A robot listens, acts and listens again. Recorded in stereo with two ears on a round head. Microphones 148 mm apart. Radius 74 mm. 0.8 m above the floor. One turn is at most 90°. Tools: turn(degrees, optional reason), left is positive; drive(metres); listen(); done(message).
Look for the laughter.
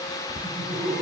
turn(degrees=30)
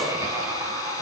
turn(degrees=-25, reason="So it is at 25° right.")
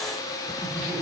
done("Facing the laughter.")